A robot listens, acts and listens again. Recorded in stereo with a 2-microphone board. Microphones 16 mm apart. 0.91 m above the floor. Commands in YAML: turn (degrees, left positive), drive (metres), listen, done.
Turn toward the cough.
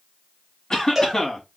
turn: 45
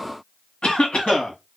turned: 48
turn: 85
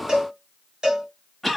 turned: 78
done: "Facing the cough, 1 to 2 m away."